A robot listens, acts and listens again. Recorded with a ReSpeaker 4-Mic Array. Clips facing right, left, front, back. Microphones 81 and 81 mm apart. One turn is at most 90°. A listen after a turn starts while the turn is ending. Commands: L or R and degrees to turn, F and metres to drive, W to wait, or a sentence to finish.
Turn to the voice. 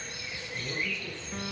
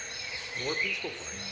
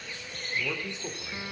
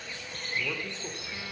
L80
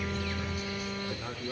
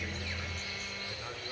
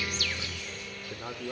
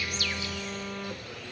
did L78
R15
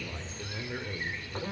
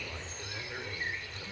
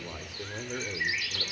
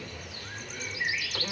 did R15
Facing the man speaking, 2 to 4 m away.